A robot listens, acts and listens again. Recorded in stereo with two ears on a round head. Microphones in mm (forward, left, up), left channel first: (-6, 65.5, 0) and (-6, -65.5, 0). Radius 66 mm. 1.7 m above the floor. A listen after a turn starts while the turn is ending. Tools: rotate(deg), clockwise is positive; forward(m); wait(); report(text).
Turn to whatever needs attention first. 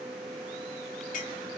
wait()
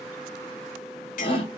rotate(-35)
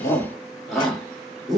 report("Facing the shout, 2 to 4 m away.")